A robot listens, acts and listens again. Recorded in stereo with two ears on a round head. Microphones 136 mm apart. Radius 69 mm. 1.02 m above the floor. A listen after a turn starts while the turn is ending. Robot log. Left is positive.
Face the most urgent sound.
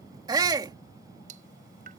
note: The shout: about 25° right or 155° right.
cmd yaw -25
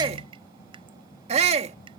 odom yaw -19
note: So it is at 135° right.
cmd yaw -135
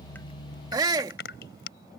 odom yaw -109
note: The shout is now 25° right.
cmd yaw -25
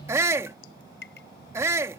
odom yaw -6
note: The shout is now 20° right.
cmd yaw -20
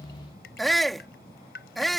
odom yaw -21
end: Facing the shout.